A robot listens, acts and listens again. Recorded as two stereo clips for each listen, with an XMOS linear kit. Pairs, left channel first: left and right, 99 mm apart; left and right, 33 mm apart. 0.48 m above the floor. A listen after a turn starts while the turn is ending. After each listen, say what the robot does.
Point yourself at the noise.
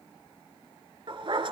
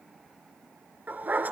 Turn 60° right.
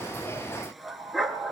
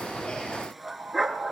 Found it: a dog barking, straight ahead, 1 to 2 m away.